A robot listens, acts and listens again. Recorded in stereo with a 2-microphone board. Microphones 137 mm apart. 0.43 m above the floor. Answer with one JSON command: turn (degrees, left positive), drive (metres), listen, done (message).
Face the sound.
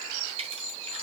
{"turn": -45}
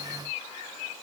{"listen": true}
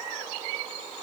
{"done": "I heard a crack, but can't make it out now. It was about straight ahead or 90° right."}